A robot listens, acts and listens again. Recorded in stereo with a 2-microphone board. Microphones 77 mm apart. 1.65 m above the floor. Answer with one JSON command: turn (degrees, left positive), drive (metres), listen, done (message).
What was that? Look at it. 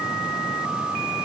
{"listen": true}
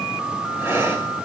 {"turn": -35}
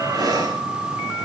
{"turn": -115}
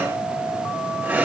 {"turn": -15}
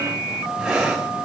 {"done": "Facing the breathing."}